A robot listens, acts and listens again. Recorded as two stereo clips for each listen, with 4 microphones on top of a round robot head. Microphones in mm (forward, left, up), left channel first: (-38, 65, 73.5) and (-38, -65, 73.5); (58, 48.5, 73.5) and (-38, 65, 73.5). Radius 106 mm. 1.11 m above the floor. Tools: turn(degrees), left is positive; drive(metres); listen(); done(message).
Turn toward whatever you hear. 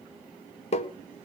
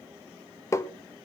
turn(degrees=50)
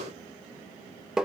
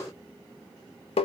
done("Facing the tapping, 1 to 2 m away.")